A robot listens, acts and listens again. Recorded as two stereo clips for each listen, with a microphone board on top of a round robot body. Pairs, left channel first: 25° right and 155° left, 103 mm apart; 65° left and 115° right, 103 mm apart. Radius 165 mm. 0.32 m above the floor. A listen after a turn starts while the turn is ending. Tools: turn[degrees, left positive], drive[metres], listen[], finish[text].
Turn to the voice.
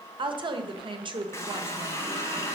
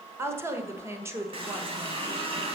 Thought: The woman speaking: 175° right.
Action: turn[-175]
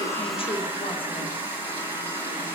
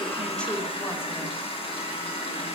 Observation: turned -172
Action: listen[]
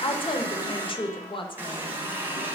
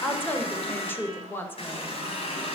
Action: finish[Found it: a woman speaking, straight ahead, 1 to 2 m away.]